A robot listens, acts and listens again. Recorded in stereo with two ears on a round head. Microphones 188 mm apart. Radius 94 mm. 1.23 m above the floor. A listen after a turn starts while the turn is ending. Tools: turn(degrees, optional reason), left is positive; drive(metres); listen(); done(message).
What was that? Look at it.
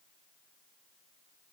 listen()
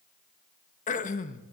turn(degrees=35, reason="The throat clearing: about 35° left or 145° left.")
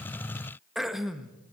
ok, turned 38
done("Facing the throat clearing.")